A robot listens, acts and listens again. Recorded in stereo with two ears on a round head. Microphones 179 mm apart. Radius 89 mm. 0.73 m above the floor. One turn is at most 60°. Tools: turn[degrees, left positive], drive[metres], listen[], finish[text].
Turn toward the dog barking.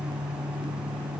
Action: listen[]
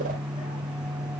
Action: listen[]
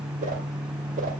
Action: finish[I can't make out a dog barking to turn to.]